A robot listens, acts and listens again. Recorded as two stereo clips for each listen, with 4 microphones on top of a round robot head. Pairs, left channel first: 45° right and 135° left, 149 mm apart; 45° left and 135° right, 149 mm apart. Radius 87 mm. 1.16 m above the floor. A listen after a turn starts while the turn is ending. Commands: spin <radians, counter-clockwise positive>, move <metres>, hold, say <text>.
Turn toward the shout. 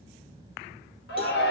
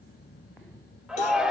spin -0.79
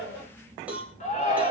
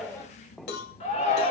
say Facing the shout, 2 to 4 m away.